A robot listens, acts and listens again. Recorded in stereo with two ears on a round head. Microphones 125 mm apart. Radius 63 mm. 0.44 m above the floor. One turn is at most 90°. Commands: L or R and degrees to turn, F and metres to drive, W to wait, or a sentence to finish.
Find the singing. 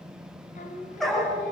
L55
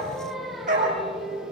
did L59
Facing the singing.